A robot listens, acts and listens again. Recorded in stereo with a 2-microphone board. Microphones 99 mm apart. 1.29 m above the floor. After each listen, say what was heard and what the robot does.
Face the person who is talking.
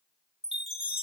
Keep listening.
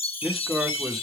Turn 30° left.
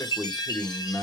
So it is at 150° left. Turn 150° left.
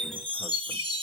Keep listening.
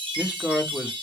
The man speaking is now 10° right. Turn 10° right.
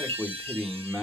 Facing the man speaking, 1 to 2 m away.